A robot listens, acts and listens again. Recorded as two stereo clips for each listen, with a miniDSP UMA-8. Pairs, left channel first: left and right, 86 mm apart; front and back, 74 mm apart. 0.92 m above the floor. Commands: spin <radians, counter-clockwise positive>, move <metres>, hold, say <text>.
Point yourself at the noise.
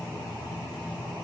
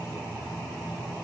hold
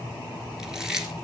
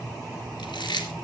say Found it: chewing, straight ahead.